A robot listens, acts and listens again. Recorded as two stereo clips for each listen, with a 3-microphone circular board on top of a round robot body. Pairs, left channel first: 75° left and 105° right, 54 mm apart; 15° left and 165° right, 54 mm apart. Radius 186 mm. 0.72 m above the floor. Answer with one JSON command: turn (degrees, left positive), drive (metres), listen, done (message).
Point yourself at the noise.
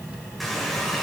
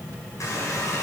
{"turn": -10}
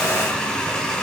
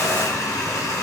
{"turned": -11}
{"done": "Found it: a running tap, straight ahead."}